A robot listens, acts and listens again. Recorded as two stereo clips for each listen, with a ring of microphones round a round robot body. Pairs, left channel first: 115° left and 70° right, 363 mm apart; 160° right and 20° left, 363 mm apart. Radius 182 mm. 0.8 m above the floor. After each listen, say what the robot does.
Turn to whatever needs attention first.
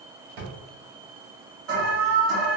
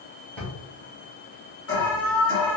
Turn 105° right.
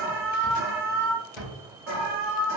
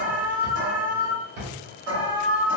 Turn 15° right.
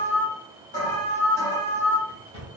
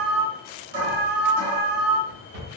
Facing the alarm, 1 to 2 m away.